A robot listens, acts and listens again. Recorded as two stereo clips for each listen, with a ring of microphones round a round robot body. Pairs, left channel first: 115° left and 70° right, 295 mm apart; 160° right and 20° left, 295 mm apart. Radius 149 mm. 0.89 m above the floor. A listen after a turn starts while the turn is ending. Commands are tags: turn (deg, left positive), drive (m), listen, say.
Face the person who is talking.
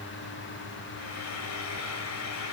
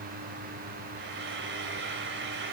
<listen/>
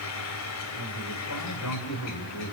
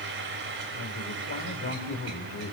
<turn deg="150"/>
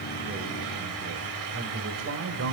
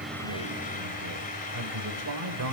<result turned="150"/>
<turn deg="-20"/>
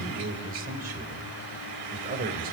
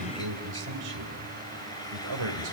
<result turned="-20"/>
<say>Facing the man speaking.</say>